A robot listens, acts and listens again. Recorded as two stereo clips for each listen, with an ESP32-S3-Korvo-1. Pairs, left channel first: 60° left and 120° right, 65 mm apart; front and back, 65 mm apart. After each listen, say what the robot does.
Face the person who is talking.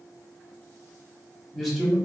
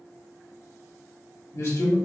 Turn 30° right.
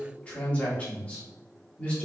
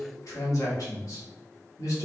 Found it: a man speaking, straight ahead.